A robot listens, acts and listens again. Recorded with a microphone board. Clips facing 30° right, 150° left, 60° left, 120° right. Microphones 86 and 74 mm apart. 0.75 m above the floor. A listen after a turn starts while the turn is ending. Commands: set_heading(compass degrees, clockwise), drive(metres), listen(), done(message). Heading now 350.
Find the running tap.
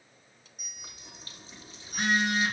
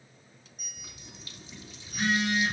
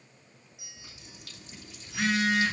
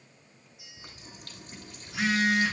set_heading(70)
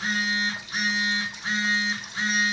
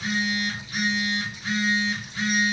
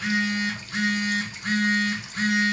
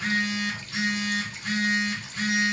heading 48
set_heading(68)
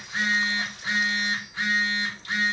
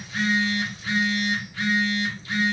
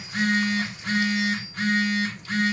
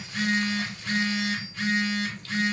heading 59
set_heading(69)
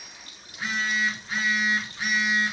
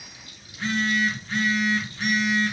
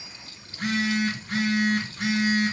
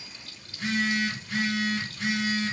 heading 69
done("Found it: a running tap, straight ahead.")